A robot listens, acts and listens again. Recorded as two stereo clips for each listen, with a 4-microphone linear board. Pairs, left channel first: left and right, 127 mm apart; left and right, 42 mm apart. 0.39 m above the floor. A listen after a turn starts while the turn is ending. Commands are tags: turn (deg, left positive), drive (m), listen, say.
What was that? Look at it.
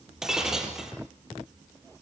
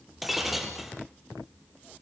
<turn deg="-30"/>
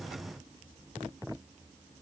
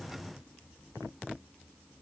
<listen/>
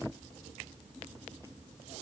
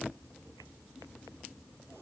<say>I heard breaking glass, but can't make it out now. It was about 25° left or 145° right.</say>